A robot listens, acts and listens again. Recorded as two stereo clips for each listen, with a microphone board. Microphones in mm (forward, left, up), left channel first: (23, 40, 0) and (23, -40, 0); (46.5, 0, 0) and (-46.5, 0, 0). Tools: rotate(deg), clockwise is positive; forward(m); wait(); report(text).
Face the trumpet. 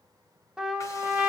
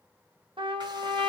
rotate(170)
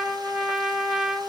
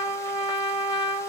report("Facing the trumpet.")